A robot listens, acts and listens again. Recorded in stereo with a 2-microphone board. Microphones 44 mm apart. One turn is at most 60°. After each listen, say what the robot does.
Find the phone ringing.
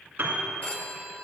Turn 30° left.
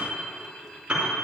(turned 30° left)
Keep listening.
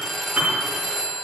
Facing the phone ringing, 1 to 2 m away.